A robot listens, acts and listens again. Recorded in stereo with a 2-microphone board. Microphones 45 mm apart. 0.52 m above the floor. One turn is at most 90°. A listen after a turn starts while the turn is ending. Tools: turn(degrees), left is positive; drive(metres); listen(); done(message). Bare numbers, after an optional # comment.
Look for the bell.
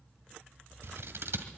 listen()
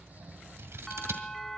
turn(30)
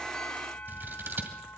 # So it is at 145° left.
turn(90)
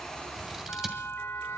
# The bell is now 105° left.
turn(90)
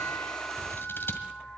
# The bell is now 30° left.
turn(30)
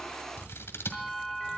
done("Facing the bell, under 1 m away.")